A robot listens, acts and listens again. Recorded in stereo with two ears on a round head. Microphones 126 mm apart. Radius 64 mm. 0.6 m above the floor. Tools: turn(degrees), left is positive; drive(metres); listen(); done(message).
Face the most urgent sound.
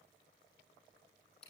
listen()
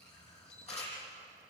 listen()
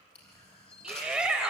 turn(degrees=-30)
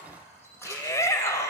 turn(degrees=20)
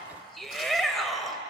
done("Facing the shout, 2 to 4 m away.")